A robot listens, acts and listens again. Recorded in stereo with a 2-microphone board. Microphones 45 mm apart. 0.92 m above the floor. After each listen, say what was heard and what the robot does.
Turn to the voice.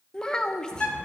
The child speaking: about 15° left or 165° left. Turn 15° left.
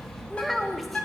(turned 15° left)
Found it: a child speaking, straight ahead.